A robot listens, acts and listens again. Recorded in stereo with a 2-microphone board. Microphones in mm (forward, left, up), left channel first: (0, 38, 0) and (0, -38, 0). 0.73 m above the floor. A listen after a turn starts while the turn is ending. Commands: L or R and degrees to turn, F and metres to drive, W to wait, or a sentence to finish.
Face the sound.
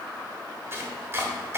R30
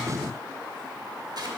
W
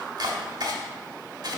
R115
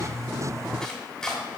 L10
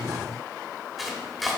Facing the chopping.